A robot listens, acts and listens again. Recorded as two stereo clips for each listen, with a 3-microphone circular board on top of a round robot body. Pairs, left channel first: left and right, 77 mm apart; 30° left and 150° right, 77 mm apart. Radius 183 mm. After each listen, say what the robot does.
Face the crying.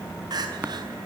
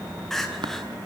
Turn 55° right.
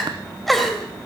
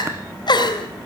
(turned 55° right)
Facing the crying, 2 to 4 m away.